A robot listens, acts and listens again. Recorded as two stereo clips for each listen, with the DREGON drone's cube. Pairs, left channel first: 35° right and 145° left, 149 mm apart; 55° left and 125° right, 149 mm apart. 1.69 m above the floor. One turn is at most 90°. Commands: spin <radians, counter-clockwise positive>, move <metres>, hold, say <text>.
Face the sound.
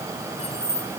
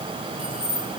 spin -1.40
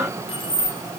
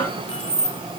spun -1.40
spin 0.26
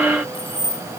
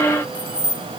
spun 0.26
spin 0.26
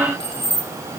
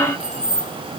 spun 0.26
spin 0.44
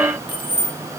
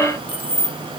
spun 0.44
spin 0.35
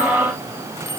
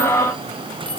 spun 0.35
hold
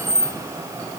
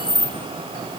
spin 0.26
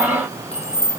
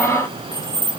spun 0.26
say Found it: keys jangling, straight ahead, 1 to 2 m away.